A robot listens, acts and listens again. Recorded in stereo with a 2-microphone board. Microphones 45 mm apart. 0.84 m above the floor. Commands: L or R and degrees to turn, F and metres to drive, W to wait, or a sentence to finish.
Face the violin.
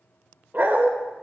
W
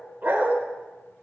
W
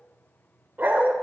I can't make out a violin to turn to.